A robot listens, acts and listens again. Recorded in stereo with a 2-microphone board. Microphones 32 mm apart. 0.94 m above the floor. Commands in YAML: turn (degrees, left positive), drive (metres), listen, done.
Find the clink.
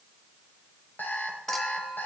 turn: 30
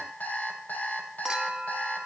turn: -20
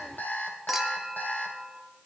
turn: -10
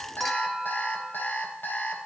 done: "Found it: a clink, straight ahead, 1 to 2 m away."